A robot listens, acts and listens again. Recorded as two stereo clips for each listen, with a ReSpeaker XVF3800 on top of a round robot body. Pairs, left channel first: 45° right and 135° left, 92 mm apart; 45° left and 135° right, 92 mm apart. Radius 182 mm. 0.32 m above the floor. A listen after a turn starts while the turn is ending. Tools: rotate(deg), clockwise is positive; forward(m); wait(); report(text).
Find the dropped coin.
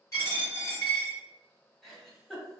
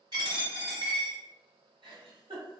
rotate(95)
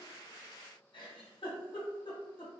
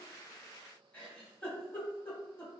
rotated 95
report("I heard a dropped coin from this way, but can't make it out now.")